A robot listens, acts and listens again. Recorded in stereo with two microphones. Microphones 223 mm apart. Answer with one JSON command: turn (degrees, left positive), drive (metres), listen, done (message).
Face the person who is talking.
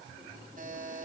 {"listen": true}
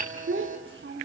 {"turn": -55}
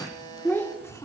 {"turn": 15}
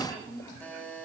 {"turn": 10}
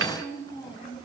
{"turn": 20}
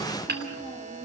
{"listen": true}
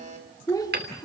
{"turn": 15}
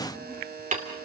{"listen": true}
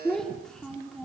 {"done": "Found it: a child speaking, straight ahead."}